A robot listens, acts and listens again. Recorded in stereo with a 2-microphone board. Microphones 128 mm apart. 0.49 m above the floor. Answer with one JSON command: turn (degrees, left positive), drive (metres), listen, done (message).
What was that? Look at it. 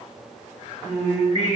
{"turn": 55}
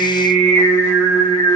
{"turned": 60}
{"turn": 15}
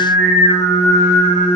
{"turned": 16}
{"turn": 10}
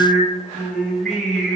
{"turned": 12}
{"done": "Facing the singing."}